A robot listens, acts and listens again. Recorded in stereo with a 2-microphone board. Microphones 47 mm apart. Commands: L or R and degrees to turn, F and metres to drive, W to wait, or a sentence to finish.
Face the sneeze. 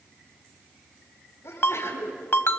L70
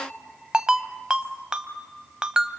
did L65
W
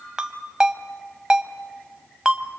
I heard a sneeze, but can't make it out now. It was about 5° left or 45° left.